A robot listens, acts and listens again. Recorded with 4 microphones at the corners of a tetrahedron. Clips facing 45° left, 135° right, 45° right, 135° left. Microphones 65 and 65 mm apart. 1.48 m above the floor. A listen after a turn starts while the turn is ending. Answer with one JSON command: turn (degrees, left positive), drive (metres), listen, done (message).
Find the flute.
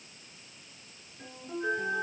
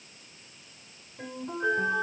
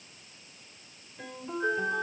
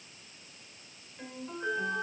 {"turn": -100}
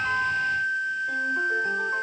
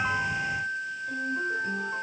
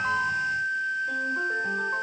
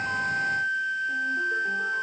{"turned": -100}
{"turn": 10}
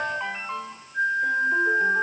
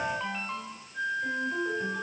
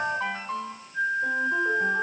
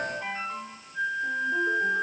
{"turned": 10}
{"done": "Found it: a flute, straight ahead, 2 to 4 m away."}